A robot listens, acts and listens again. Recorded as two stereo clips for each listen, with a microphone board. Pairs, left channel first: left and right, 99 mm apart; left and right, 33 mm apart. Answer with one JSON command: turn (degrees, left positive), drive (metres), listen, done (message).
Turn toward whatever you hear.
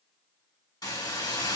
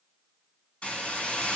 {"turn": 40}
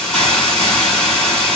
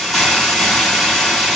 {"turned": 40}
{"turn": 10}
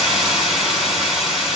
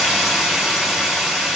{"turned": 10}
{"done": "Facing the hiss, 1 to 2 m away."}